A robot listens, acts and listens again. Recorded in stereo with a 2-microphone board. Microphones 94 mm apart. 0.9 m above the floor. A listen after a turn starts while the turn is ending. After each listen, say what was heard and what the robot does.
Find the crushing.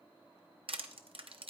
The crushing: about 75° right or 105° right. Turn 75° right.
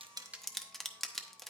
Facing the crushing, under 1 m away.